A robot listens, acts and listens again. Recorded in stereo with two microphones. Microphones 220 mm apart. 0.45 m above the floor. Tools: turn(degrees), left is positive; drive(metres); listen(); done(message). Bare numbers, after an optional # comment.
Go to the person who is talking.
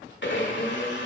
listen()
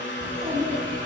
# The child speaking: about 25° right or 155° right.
turn(-25)
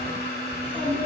drive(1.0)
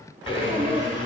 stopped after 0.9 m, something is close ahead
done("I am next to the child speaking.")